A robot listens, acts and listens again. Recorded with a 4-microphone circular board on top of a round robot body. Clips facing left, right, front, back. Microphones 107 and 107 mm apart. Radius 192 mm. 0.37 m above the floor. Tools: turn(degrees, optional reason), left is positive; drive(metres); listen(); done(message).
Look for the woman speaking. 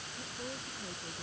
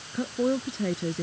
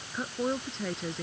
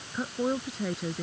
turn(degrees=-95, reason="The woman speaking: 95° right.")
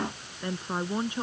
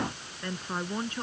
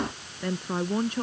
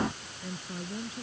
turn(degrees=20, reason="The woman speaking is now 20° left.")
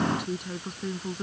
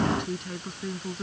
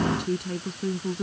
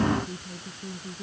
turn(degrees=10, reason="The woman speaking is now 10° left.")
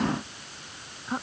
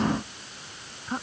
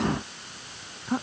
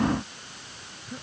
done("Facing the woman speaking.")